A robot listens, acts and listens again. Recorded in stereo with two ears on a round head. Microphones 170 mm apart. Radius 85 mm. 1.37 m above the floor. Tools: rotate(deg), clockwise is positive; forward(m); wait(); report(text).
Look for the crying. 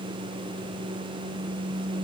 wait()
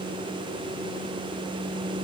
wait()
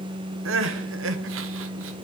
rotate(75)
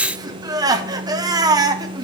rotate(20)
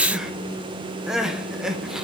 report("Found it: crying, straight ahead, under 1 m away.")